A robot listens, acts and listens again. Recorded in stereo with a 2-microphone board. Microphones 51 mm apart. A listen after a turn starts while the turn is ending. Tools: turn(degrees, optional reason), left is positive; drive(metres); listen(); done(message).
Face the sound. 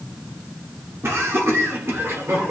turn(degrees=-55, reason="The laughter: about 55° right or 125° right.")
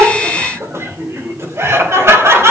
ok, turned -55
turn(degrees=-65, reason="So it is at 65° right.")
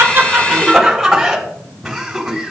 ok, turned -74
done("Found it: laughter, straight ahead, over 4 m away.")